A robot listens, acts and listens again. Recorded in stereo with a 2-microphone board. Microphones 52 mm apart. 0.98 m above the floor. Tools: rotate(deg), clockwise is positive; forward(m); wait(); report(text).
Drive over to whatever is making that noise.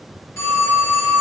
rotate(-70)
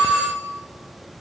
rotate(-40)
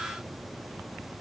wait()
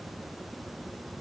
wait()
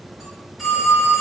forward(1.0)
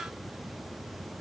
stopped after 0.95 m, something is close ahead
wait()
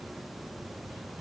wait()
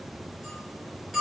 report("I am next to the phone ringing.")